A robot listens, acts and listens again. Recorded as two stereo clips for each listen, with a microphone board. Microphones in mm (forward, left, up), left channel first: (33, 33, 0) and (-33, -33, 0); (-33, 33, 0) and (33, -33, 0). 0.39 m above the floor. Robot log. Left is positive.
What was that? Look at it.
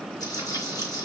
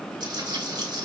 end: Found it: frying, straight ahead, over 4 m away.